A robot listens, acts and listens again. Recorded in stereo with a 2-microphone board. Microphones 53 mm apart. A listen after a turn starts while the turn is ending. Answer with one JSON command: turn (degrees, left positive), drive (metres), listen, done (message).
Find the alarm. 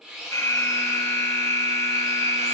{"turn": 70}
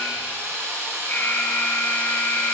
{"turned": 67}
{"turn": 40}
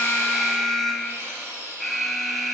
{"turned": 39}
{"done": "Facing the alarm."}